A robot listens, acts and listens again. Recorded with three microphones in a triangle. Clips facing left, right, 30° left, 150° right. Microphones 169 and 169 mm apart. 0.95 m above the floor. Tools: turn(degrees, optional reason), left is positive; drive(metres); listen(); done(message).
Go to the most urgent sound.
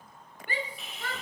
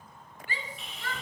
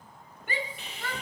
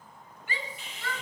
turn(degrees=60, reason="The shout: 60° left.")
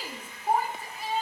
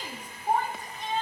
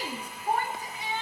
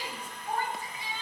drive(metres=1.0)
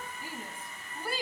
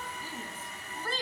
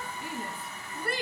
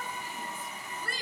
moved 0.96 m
turn(degrees=15, reason="The shout is now 15° left.")
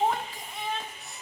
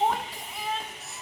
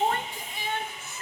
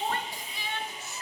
drive(metres=1.0)
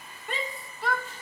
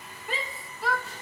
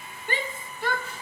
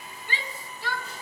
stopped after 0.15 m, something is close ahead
done("Arrived at the shout, straight ahead.")